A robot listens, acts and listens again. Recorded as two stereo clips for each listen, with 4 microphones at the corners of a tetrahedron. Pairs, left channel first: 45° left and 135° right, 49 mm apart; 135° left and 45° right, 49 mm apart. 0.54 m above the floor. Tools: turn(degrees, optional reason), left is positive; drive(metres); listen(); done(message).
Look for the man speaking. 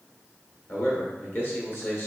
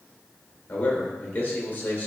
turn(degrees=85, reason="The man speaking: 85° left.")
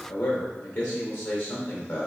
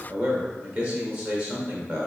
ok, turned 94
turn(degrees=-10, reason="The man speaking is now 10° right.")
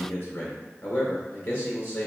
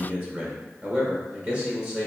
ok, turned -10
done("Found it: a man speaking, straight ahead.")